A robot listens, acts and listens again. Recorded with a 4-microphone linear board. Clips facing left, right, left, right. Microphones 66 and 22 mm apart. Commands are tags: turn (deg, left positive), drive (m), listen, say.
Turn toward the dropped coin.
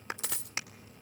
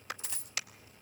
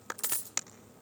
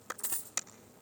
<turn deg="90"/>
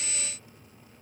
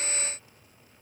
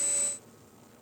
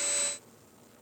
<say>Facing where the dropped coin came from. I can't hear it now.</say>